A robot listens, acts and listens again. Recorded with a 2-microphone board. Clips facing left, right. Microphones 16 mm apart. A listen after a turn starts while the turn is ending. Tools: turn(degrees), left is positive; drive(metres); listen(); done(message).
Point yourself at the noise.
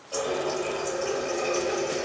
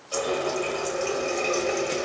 turn(degrees=-65)
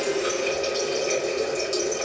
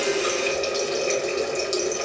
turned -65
turn(degrees=-25)
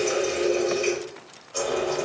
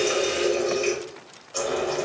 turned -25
turn(degrees=-10)
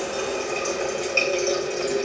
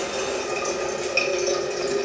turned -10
done("Found it: a running tap, straight ahead.")